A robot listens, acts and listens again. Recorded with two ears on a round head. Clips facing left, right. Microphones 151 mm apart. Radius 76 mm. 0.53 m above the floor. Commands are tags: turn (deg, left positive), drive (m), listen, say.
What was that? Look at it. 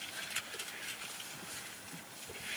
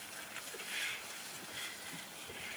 <listen/>
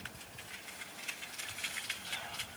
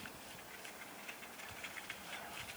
<listen/>
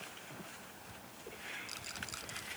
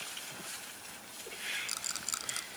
<turn deg="-60"/>
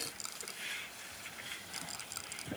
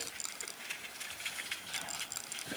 <say>Found it: a rattle, straight ahead.</say>